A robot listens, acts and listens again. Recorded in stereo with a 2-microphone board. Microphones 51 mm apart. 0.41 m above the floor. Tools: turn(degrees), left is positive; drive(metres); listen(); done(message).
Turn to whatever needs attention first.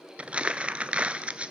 listen()
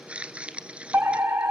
turn(degrees=-65)
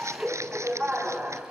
turn(degrees=-35)
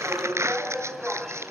turn(degrees=-15)
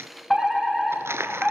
done("Facing the fire alarm.")